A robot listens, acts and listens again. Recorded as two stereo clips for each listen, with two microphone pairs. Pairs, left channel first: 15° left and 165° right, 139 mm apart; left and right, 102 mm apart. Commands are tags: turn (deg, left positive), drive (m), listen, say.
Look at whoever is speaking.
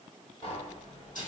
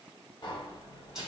<listen/>
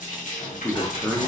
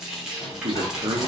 <turn deg="-60"/>
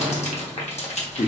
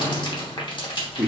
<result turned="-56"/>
<say>Found it: a man speaking, straight ahead.</say>